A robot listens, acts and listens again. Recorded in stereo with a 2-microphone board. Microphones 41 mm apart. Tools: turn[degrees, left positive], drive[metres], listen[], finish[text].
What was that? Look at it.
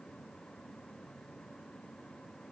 Action: listen[]
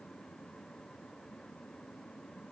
Action: listen[]
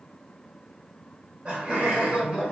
Thought: The laughter: about 25° right or 155° right.
Action: turn[-25]
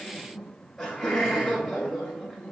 Action: finish[Found it: laughter, straight ahead, 1 to 2 m away.]